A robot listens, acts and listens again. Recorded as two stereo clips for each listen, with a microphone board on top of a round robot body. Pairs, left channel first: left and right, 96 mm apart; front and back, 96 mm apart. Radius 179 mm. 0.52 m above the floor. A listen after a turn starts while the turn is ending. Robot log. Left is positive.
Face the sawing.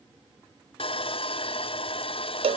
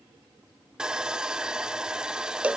note: The sawing: 100° left.
cmd yaw +100
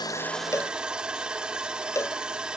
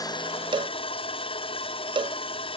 note: The sawing is now 10° right.
cmd yaw -10
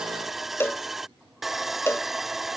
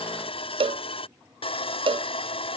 end: Facing the sawing.